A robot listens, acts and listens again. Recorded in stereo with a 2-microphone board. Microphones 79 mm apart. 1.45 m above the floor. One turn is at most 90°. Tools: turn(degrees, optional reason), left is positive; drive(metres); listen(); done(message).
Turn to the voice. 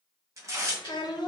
turn(degrees=65, reason="The child speaking: about 65° left or 115° left.")
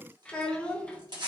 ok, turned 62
turn(degrees=15, reason="So it is at 15° left.")
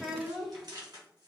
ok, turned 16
done("Found it: a child speaking, straight ahead, under 1 m away.")